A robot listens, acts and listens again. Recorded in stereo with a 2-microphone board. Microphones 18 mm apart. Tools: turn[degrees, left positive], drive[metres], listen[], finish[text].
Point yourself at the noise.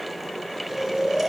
Thought: The snoring: about 25° right or 155° right.
Action: turn[-25]
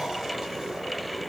Action: listen[]
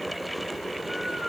Action: listen[]
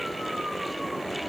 Action: finish[I heard snoring, but can't make it out now. It was about straight ahead or 130° right.]